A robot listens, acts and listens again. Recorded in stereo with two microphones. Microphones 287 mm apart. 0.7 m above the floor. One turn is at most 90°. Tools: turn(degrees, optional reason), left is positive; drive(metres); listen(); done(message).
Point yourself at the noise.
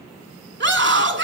turn(degrees=-40, reason="The scream: about 40° right or 140° right.")
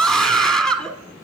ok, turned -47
done("Found it: a scream, straight ahead, 1 to 2 m away.")